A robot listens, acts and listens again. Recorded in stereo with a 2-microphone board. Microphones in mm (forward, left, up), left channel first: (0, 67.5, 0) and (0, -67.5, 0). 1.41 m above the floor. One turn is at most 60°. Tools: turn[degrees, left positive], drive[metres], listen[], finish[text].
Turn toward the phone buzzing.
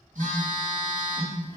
Thought: The phone buzzing: about 75° right or 105° right.
Action: turn[-60]
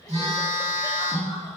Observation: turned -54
Thought: So it is at 55° right.
Action: turn[-55]
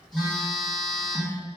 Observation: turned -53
Action: finish[Facing the phone buzzing.]